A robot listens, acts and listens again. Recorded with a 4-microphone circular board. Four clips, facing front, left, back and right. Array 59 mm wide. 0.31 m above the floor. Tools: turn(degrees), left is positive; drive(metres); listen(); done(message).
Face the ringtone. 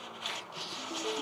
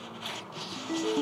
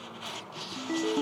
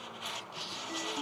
turn(degrees=170)
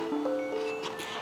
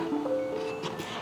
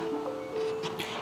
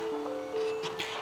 turn(degrees=20)
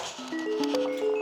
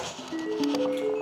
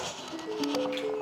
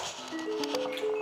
done("Found it: a ringtone, straight ahead.")